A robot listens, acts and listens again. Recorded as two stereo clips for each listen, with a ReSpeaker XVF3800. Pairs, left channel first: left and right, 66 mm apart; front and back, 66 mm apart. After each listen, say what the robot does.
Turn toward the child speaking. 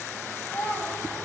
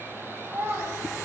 Turn 135° left.
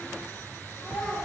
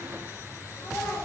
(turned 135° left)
Keep listening.
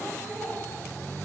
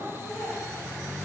Found it: a child speaking, straight ahead.